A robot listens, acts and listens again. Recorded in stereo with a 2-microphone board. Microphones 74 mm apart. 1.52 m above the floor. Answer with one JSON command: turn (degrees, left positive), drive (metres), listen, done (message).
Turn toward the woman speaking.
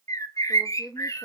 {"turn": -30}
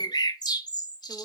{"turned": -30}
{"listen": true}
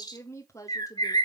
{"turn": 45}
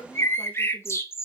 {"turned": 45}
{"turn": 20}
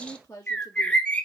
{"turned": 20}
{"turn": 25}
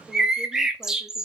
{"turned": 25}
{"listen": true}
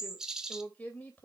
{"turn": 10}
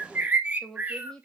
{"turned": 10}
{"done": "Facing the woman speaking, 2 to 4 m away."}